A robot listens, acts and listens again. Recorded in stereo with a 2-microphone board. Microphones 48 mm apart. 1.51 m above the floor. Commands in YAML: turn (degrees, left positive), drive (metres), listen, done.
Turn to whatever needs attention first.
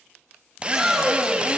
turn: -30
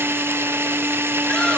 listen: true
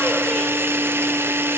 listen: true
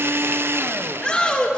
turn: 20
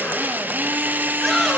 done: "Facing the shout."